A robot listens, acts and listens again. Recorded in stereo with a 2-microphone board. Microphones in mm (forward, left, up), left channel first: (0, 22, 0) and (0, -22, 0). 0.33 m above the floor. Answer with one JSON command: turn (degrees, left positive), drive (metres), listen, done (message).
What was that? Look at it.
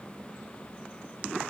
{"listen": true}
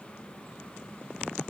{"listen": true}
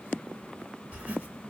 {"turn": -35}
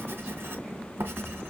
{"turn": -110}
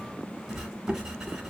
{"turn": -15}
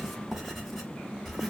{"done": "Found it: writing, straight ahead."}